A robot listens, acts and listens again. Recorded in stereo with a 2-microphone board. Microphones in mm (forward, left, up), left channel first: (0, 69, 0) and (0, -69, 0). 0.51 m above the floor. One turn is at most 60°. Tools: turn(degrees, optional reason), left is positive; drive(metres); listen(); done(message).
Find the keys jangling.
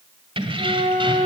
turn(degrees=-40, reason="The keys jangling: about 40° right or 140° right.")
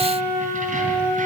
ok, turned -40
listen()
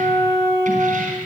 listen()
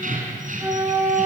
turn(degrees=-60, reason="So it is at 105° right.")
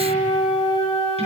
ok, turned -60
turn(degrees=-45, reason="Nothing new. It was at 45° right.")
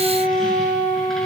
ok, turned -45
listen()
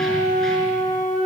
done("Facing where the keys jangling came from. I can't hear it now.")